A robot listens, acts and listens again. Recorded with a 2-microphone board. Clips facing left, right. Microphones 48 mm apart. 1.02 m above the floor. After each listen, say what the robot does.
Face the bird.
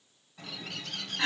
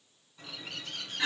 Turn 90° left.
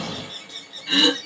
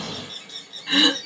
Facing the bird.